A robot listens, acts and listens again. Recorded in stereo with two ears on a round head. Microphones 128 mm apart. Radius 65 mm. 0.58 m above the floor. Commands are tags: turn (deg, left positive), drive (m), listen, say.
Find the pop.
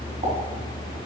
<turn deg="-40"/>
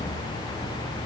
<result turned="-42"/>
<listen/>
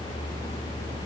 <say>I heard a pop, but can't make it out now. It was about 5° left or 100° right.</say>